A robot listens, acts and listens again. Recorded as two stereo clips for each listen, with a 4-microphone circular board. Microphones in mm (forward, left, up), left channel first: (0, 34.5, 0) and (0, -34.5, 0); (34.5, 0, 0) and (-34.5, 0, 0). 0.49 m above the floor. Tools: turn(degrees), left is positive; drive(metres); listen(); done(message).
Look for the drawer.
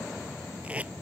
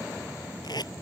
listen()
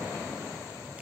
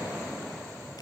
listen()
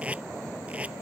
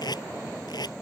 done("I can't make out a drawer, only tape being pulled.")